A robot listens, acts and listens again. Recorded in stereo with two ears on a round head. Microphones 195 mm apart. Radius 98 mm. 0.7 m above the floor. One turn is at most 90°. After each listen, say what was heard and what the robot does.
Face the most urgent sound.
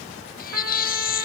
The baby crying: about 45° left or 135° left. Turn 45° left.
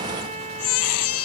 So it is at 90° left. Turn 90° left.
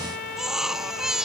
Facing the baby crying.